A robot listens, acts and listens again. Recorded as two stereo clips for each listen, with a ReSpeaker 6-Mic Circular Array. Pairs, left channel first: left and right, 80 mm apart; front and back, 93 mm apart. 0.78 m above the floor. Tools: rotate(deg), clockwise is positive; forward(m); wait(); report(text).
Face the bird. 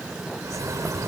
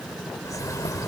rotate(50)
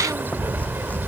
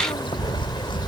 rotate(30)
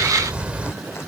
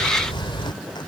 rotate(20)
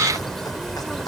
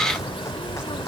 report("Facing the bird.")